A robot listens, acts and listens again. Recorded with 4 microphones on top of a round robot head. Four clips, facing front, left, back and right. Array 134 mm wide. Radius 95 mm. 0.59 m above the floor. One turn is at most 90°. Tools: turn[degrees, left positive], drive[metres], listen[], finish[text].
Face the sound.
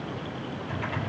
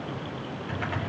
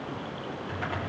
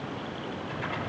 Thought: The typing on a keyboard: 140° left.
Action: turn[90]
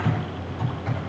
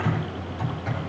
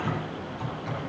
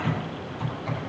Thought: The typing on a keyboard is now 50° left.
Action: turn[50]
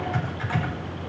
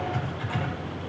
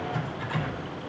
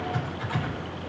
Action: finish[Facing the typing on a keyboard, 2 to 4 m away.]